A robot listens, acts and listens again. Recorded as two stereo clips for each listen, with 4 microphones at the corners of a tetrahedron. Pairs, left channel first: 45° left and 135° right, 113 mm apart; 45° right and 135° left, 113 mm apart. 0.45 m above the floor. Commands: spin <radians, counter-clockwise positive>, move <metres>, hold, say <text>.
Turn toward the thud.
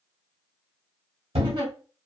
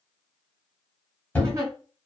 spin -2.09
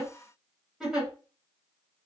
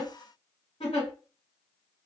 say I heard a thud from this way, but can't make it out now.